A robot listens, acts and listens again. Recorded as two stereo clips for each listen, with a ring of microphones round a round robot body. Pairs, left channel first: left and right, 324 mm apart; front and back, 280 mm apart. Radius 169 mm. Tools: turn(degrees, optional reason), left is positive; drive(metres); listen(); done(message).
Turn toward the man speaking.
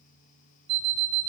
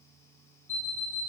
listen()
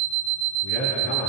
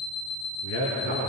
turn(degrees=35, reason="The man speaking: 35° left.")
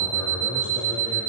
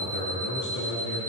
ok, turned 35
turn(degrees=15, reason="The man speaking is now 15° left.")
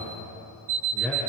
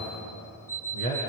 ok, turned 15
done("Found it: a man speaking, straight ahead.")